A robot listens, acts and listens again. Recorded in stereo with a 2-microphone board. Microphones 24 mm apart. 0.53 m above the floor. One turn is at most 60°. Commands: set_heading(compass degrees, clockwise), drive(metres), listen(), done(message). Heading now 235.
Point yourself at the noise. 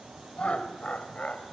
set_heading(180)
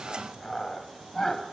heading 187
set_heading(172)
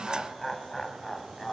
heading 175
done("Found it: laughter, straight ahead, 2 to 4 m away.")